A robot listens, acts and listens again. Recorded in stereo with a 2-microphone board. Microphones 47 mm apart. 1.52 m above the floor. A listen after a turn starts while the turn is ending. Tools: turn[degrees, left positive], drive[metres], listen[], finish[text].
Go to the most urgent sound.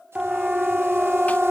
Thought: The siren: about 15° right or 165° right.
Action: turn[-15]
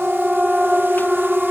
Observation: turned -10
Action: drive[1.0]
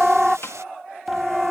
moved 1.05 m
Action: drive[1.0]
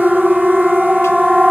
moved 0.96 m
Action: drive[1.0]
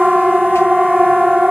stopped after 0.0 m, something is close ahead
Action: finish[Arrived at the siren, straight ahead.]